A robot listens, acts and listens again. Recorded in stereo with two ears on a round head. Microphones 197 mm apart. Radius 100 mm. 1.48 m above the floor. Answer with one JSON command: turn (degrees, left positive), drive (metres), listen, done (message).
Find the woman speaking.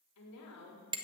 {"turn": 90}
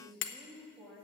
{"done": "Found it: a woman speaking, straight ahead."}